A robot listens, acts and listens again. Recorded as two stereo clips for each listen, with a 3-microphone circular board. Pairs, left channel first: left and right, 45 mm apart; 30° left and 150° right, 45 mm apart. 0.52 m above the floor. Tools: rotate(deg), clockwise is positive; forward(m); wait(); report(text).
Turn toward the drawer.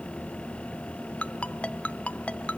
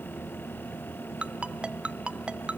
wait()
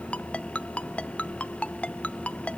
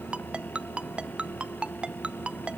wait()
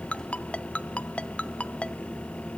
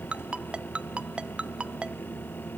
report("I can't make out a drawer, only a ringtone.")